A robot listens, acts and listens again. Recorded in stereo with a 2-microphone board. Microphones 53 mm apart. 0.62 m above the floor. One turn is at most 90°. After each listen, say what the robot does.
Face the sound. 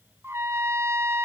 Turn 55° right.
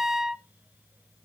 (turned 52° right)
Turn 10° right.
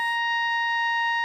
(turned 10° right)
Found it: a trumpet, straight ahead.